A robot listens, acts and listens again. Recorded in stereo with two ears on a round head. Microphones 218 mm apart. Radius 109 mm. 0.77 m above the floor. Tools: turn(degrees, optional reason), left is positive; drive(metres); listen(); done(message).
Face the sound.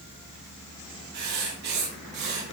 turn(degrees=-45, reason="The writing: about 45° right or 135° right.")
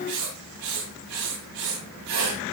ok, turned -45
turn(degrees=-90, reason="So it is at 90° right.")
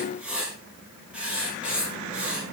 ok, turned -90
done("Found it: writing, straight ahead.")